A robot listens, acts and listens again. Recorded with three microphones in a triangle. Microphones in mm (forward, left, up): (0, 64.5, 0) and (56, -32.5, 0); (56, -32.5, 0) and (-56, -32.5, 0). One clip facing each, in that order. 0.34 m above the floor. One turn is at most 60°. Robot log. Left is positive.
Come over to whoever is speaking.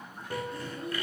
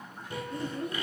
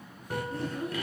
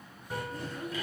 note: The child speaking: 55° right.
cmd yaw -55
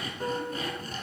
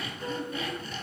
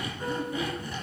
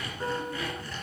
cmd idle
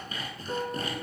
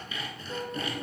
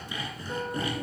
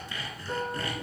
cmd idle
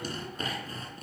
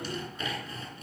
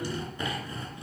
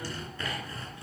end: Facing where the child speaking came from. I can't hear it now. I did not reach it.